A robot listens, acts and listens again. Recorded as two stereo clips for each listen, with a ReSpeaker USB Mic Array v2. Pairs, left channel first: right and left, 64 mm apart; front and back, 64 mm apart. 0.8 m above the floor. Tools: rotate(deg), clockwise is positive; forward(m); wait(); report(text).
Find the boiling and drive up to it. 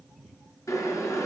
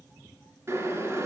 rotate(130)
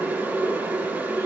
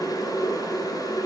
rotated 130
rotate(-25)
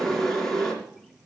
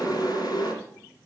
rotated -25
forward(1.0)
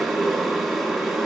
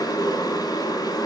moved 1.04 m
forward(1.0)
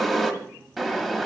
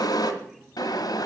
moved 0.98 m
forward(1.0)
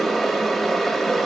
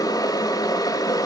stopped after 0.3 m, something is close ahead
report("I am next to the boiling.")